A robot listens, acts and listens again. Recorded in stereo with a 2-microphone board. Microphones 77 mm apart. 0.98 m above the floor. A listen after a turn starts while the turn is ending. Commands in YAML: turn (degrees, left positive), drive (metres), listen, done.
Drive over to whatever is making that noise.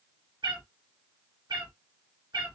turn: -70
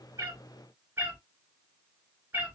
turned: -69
turn: -25
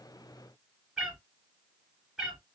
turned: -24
drive: 1.0
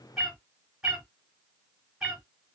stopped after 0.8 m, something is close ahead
done: "I am next to the cat meowing."